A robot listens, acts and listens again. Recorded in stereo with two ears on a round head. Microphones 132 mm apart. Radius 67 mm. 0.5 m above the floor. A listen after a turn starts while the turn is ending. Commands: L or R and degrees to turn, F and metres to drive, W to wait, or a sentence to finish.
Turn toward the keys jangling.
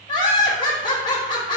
W
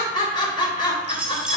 R30
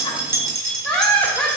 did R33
R160
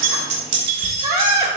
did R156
R35
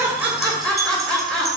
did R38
Facing the keys jangling, 2 to 4 m away.